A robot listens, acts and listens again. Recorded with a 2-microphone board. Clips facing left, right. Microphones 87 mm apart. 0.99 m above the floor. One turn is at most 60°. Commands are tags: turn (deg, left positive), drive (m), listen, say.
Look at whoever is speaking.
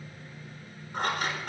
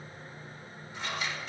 <listen/>
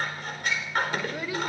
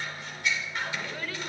<turn deg="30"/>
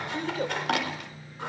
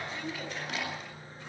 <turn deg="60"/>
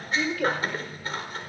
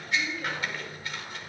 <turn deg="60"/>
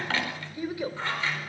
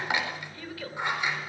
<turn deg="20"/>
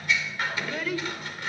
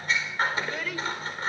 <say>Found it: a child speaking, straight ahead.</say>